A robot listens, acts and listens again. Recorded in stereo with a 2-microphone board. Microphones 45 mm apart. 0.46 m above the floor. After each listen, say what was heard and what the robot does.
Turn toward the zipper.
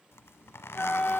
Turn 90° left.
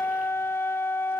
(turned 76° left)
Nothing new. It was at 15° left. Turn 15° left.
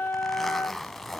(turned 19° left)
Facing the zipper.